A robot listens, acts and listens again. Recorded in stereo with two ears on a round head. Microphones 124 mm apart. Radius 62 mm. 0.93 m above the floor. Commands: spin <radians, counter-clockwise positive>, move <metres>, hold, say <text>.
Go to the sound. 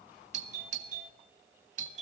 spin -0.96
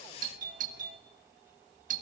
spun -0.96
spin -1.13
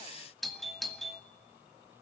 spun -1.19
move 1.0
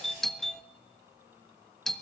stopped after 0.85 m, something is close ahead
say I am next to the doorbell.